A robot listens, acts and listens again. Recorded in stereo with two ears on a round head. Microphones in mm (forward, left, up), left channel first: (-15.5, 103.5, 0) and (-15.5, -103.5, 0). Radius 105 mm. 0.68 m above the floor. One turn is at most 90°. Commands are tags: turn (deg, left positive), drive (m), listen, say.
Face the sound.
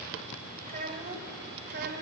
<turn deg="-50"/>
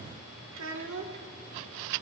<turn deg="-45"/>
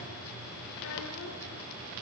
<listen/>
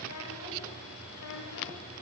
<turn deg="80"/>
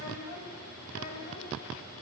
<turn deg="35"/>
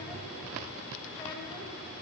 <listen/>
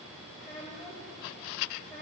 <say>Found it: a child speaking, straight ahead, 2 to 4 m away.</say>